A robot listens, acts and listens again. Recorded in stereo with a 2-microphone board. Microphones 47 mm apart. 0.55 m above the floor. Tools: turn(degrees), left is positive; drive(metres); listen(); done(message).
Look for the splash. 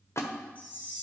turn(degrees=75)
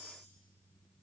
listen()
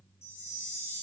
done("I heard a splash, but can't make it out now. It was about straight ahead or 30° left.")